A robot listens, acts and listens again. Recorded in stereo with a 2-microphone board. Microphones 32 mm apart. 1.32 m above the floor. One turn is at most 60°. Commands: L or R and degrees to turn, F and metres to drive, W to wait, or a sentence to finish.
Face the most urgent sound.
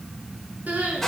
R50
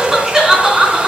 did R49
R15
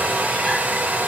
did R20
W
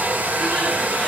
W
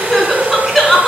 Facing the crying, 2 to 4 m away.